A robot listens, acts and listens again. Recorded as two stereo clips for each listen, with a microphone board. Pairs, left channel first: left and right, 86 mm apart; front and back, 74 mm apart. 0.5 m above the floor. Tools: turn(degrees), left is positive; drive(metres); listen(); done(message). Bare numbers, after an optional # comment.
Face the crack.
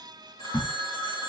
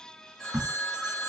# The crack: 130° left.
turn(130)
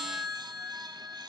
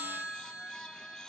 done("Facing where the crack came from. I can't hear it now.")